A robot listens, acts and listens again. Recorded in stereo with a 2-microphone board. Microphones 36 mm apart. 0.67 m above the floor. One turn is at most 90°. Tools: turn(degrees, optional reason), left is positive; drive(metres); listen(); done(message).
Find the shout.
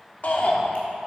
turn(degrees=50, reason="The shout: about 50° left or 130° left.")
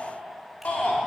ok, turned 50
turn(degrees=65, reason="So it is at 65° left.")
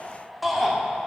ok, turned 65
done("Facing the shout.")